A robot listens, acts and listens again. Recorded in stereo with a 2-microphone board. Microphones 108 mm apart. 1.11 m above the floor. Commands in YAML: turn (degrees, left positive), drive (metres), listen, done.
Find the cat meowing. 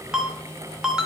listen: true
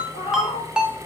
turn: 70
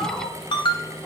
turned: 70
turn: 20
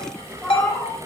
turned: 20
turn: 10
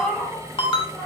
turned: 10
done: "Found it: a cat meowing, straight ahead, 2 to 4 m away."